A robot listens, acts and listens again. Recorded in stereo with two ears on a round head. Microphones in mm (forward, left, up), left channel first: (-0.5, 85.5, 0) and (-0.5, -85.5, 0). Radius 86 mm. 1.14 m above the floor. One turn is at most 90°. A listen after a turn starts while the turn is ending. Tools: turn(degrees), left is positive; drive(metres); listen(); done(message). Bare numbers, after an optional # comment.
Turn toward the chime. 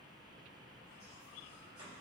listen()
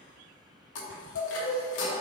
# The chime: about 70° left or 110° left.
turn(70)
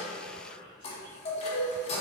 # So it is at 35° left.
turn(35)
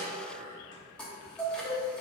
done("Found it: a chime, straight ahead.")